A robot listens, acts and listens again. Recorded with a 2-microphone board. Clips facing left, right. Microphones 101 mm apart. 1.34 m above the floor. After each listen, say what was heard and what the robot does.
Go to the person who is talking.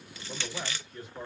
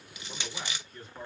Turn 30° left.
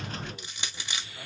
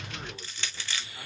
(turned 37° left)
Keep listening.
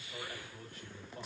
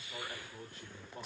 So it is at 35° right. Turn 35° right.
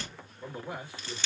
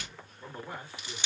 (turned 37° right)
Drive 1.0 m forward.
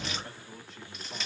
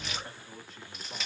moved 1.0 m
Drive 1.0 m forward.
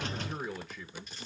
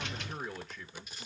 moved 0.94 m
Drive 1.0 m forward.
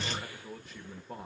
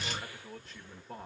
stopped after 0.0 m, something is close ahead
Arrived at the man speaking, straight ahead.